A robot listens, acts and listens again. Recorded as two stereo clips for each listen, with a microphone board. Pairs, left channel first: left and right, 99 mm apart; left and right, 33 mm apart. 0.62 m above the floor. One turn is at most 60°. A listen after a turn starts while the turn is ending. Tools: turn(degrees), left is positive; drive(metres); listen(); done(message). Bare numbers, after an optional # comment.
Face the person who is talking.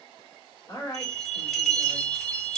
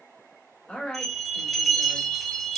# The woman speaking: about 35° left or 145° left.
turn(35)
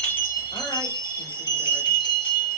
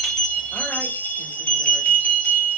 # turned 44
listen()
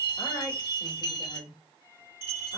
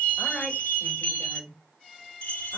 # So it is at 90° left.
turn(60)
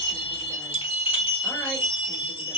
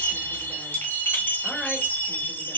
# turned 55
# Nothing new. It was at 35° left.
turn(35)
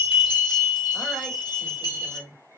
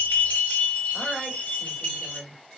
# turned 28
# The woman speaking is now 10° left.
turn(10)
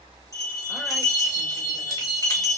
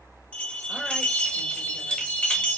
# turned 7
listen()
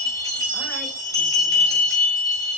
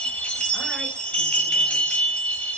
listen()
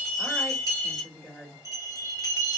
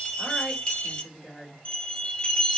done("Found it: a woman speaking, straight ahead, 1 to 2 m away.")